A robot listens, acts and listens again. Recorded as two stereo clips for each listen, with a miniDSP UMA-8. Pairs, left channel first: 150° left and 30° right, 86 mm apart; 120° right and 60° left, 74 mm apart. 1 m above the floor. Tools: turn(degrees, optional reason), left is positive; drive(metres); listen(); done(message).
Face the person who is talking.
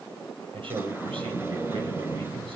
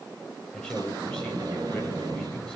turn(degrees=-40, reason="The man speaking: 40° right.")
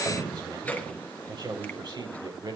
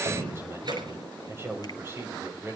done("Facing the man speaking, over 4 m away.")